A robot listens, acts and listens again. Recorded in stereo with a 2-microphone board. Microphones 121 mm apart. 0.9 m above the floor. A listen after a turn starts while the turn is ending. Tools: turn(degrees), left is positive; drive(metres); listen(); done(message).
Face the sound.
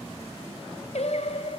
turn(degrees=65)
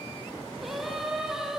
done("Facing the singing, 2 to 4 m away.")